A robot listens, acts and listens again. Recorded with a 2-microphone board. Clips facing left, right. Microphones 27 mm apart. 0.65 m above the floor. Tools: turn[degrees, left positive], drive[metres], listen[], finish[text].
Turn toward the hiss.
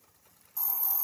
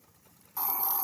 Thought: The hiss: about 55° right or 125° right.
Action: turn[-55]
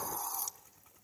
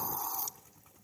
Action: finish[Facing the hiss, 1 to 2 m away.]